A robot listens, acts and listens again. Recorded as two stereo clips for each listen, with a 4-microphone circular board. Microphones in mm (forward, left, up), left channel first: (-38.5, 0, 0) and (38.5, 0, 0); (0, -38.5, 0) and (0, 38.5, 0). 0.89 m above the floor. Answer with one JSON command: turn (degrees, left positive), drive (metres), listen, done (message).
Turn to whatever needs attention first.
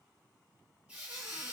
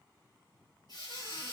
{"listen": true}
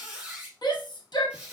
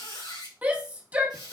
{"turn": 160}
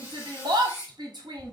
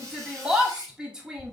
{"turn": 10}
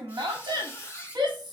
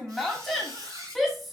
{"done": "Found it: a shout, straight ahead, 1 to 2 m away."}